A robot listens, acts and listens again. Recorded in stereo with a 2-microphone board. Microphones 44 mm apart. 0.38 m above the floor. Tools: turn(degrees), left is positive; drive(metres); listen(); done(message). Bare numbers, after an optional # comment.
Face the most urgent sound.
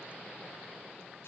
listen()
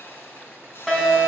turn(30)
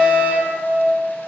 # So it is at 140° left.
turn(140)
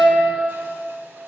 # The fire alarm is now 25° right.
turn(-25)
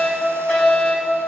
# The fire alarm is now 10° left.
turn(10)
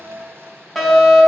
done("Found it: a fire alarm, straight ahead, over 4 m away.")